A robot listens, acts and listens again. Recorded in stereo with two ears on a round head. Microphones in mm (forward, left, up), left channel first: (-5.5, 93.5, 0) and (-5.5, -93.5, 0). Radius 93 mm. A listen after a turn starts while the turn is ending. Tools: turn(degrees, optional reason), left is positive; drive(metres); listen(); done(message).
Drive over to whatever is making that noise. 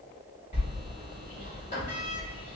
turn(degrees=35, reason="The sliding door: about 35° left or 145° left.")
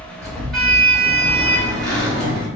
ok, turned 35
drive(metres=1.0)
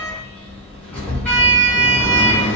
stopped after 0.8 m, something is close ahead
turn(degrees=10, reason="The sliding door is now 10° left.")
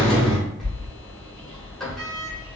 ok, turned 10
done("Arrived at the sliding door, straight ahead.")